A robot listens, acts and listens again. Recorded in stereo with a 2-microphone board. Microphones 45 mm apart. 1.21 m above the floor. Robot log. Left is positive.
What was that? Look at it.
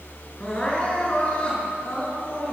note: The crying: about 25° left or 155° left.
cmd yaw +25
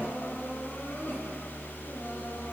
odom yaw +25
note: So it is at 130° left.
cmd yaw +130
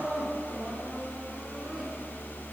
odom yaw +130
note: The crying is now 30° right.
cmd yaw -30
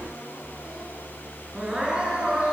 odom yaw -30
note: The crying is now 20° right.
cmd yaw -20
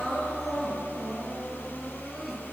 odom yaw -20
end: Found it: crying, straight ahead, over 4 m away.